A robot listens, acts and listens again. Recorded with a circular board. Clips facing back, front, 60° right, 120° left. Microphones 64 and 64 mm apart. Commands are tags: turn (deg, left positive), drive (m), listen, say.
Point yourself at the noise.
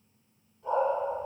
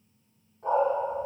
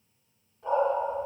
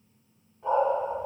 <turn deg="45"/>
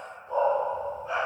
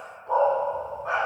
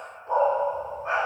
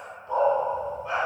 <say>Found it: a dog barking, straight ahead, 2 to 4 m away.</say>